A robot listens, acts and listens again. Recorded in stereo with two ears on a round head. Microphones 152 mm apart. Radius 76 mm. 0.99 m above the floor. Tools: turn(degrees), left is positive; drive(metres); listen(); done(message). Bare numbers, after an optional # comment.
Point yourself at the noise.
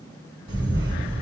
# The camera shutter: about 30° right or 150° right.
turn(-30)
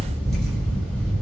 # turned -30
done("Facing the camera shutter, 1 to 2 m away.")